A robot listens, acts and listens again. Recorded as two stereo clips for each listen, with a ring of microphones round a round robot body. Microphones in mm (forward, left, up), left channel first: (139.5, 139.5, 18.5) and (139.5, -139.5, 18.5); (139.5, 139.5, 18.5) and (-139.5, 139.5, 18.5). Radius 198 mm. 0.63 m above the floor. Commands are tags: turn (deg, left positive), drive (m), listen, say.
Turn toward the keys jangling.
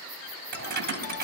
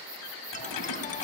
<turn deg="-35"/>
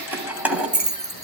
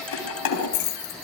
<say>Facing the keys jangling.</say>